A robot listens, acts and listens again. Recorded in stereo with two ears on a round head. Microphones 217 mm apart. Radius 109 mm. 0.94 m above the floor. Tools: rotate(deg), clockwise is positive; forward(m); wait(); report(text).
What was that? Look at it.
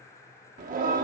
rotate(35)
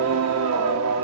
rotate(110)
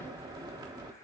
rotate(15)
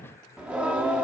report("Facing the singing, 1 to 2 m away.")